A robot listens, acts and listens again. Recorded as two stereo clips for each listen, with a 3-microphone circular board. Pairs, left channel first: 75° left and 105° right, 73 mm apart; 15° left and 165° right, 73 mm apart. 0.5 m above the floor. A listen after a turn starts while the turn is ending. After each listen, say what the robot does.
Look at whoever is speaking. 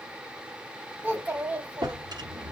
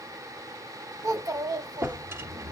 Turn 165° right.
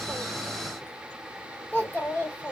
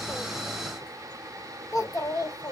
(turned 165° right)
Turn 20° left.
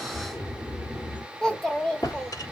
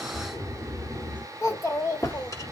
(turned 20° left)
Facing the child speaking, 1 to 2 m away.